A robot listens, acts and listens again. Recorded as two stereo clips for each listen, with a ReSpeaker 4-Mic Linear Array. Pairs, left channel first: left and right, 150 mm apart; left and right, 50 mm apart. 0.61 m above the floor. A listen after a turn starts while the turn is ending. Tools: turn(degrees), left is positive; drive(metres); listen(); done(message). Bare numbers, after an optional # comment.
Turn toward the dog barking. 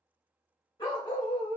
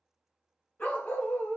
# The dog barking: about 25° left or 155° left.
turn(25)
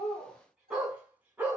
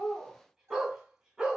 # So it is at 10° right.
turn(-10)
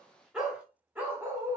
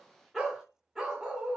# The dog barking is now 15° right.
turn(-15)
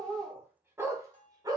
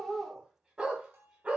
# The dog barking is now 25° right.
turn(-25)
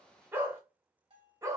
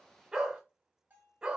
# The dog barking is now 20° right.
turn(-20)
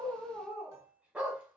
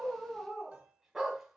# The dog barking is now 10° right.
turn(-10)
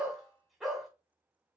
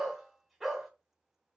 done("Found it: a dog barking, straight ahead, 1 to 2 m away.")